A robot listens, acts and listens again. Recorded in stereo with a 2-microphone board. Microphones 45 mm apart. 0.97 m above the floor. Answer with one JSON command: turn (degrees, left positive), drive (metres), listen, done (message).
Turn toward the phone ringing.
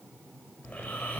{"listen": true}
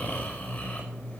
{"listen": true}
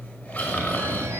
{"turn": -90}
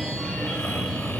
{"turn": 10}
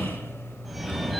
{"done": "Facing the phone ringing."}